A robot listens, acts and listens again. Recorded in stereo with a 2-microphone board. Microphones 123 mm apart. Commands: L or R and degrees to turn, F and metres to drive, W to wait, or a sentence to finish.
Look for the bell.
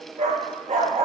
W
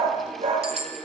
R55
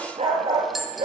Facing the bell, 1 to 2 m away.